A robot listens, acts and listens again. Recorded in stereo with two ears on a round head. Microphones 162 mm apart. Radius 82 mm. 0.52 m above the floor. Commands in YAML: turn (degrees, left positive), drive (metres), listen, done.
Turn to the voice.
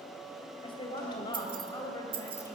turn: 20
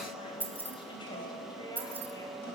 listen: true
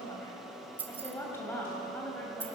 turn: 30
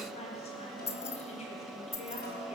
turn: 140
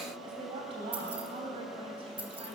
turn: -30
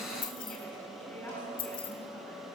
listen: true
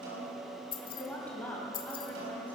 turn: 10
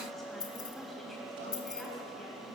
listen: true
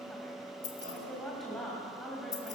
done: "Found it: a woman speaking, straight ahead, 2 to 4 m away."